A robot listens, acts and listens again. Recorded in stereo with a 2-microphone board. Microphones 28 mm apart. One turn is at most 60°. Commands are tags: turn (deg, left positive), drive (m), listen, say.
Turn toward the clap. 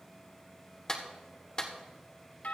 <turn deg="25"/>
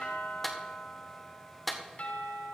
<say>Facing the clap, 1 to 2 m away.</say>